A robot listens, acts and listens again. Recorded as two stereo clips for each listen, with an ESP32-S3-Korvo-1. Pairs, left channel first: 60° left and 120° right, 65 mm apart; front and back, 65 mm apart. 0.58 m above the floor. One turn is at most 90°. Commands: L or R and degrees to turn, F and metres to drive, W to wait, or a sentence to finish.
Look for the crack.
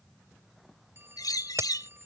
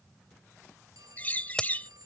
R80
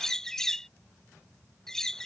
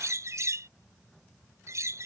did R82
Facing where the crack came from. I can't hear it now.